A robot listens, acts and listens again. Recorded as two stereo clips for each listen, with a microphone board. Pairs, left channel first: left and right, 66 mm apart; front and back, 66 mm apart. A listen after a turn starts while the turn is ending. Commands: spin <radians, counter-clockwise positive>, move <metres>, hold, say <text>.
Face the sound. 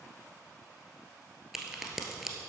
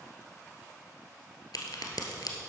say Facing the crack.